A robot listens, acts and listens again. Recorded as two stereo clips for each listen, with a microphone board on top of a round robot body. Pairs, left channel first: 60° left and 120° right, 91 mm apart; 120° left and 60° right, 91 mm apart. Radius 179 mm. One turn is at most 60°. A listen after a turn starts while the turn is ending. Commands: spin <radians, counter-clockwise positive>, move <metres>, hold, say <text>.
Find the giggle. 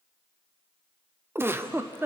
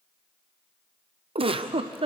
spin -0.96
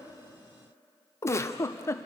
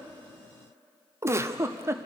say Facing the giggle.